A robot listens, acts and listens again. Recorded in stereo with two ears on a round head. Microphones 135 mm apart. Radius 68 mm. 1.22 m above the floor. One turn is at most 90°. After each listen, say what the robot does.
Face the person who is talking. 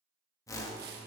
Keep listening.
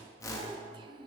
Turn 30° right.
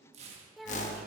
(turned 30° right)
Facing the child speaking, under 1 m away.